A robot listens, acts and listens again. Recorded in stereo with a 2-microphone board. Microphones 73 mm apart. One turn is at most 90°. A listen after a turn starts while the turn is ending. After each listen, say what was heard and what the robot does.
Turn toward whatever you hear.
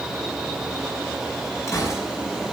The gunshot: about 45° left or 135° left. Turn 45° left.
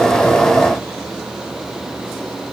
Keep listening.
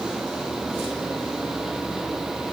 I heard a gunshot, but can't make it out now. It was about straight ahead or 90° left.